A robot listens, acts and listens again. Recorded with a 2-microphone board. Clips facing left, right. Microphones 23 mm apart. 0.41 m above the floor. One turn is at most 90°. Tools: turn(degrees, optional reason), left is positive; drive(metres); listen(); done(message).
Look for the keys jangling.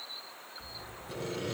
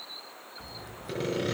turn(degrees=-70, reason="The keys jangling: about 70° right or 110° right.")
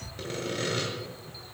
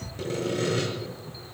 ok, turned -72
turn(degrees=-20, reason="So it is at 20° right.")
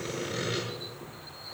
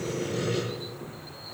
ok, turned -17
turn(degrees=10, reason="The keys jangling is now 10° left.")
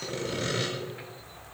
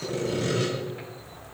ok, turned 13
done("Facing the keys jangling.")